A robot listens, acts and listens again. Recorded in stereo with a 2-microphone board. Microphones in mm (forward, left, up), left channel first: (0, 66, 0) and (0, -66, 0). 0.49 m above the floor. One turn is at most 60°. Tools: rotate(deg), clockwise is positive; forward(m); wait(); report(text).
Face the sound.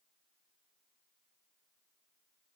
wait()
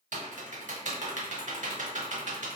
rotate(60)
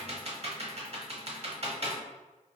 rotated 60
rotate(50)
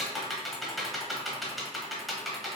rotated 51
report("Facing the typing on a keyboard, under 1 m away.")